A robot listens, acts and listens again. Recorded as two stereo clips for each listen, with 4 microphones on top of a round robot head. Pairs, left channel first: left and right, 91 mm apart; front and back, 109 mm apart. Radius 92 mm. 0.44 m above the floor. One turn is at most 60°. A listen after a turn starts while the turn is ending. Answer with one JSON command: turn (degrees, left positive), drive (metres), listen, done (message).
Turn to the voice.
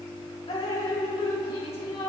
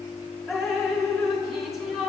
{"listen": true}
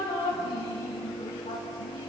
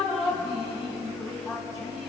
{"listen": true}
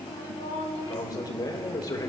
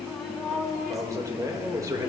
{"turn": 60}
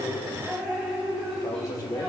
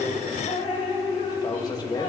{"turn": 40}
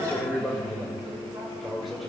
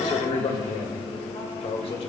{"done": "Found it: a man speaking, straight ahead."}